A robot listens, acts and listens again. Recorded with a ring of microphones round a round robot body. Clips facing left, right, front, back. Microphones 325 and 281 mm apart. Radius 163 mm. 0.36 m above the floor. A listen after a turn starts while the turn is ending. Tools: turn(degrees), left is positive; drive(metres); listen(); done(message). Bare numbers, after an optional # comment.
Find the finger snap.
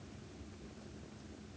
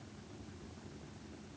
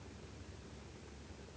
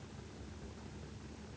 listen()
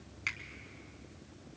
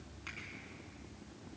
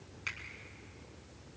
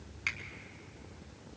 # The finger snap: 125° left.
turn(125)
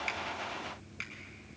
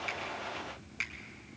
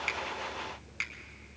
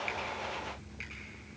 # The finger snap is now 15° right.
turn(-15)
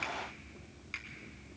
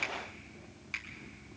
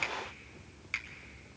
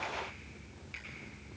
done("Found it: a finger snap, straight ahead.")